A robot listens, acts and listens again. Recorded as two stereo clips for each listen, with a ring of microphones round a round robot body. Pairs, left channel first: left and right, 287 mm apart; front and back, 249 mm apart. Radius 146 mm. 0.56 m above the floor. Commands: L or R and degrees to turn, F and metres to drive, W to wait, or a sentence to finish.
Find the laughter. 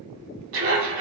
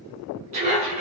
R120
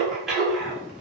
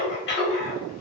Found it: laughter, straight ahead.